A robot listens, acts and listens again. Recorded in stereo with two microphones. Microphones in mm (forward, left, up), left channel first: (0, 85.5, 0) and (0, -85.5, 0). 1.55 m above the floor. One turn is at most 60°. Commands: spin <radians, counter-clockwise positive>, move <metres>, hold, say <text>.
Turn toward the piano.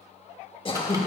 hold
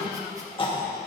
hold
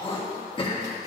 say I can't make out a piano to turn to.